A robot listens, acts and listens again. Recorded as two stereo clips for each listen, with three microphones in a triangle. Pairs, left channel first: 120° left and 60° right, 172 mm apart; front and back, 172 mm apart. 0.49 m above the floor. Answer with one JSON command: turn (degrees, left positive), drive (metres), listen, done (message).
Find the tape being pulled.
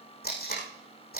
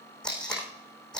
{"turn": 85}
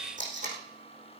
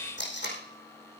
{"turn": -15}
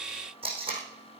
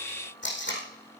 {"done": "Found it: tape being pulled, straight ahead, over 4 m away."}